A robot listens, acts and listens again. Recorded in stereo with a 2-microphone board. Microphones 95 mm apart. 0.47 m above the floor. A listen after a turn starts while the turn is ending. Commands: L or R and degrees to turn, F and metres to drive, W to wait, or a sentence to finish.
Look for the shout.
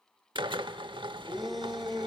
L30
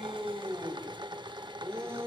R30
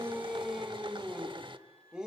R10
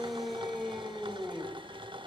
Found it: a shout, straight ahead, 2 to 4 m away.